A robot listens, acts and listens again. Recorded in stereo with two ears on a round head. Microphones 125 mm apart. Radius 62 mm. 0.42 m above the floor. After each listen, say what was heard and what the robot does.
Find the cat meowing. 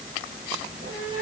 The cat meowing: about 65° right or 115° right. Turn 65° right.
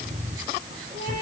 So it is at 50° right. Turn 50° right.
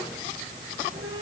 The cat meowing is now 25° right. Turn 25° right.
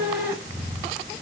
The cat meowing is now 25° right. Turn 25° right.
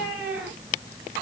The cat meowing is now 15° right. Turn 15° right.
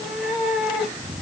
Found it: a cat meowing, straight ahead.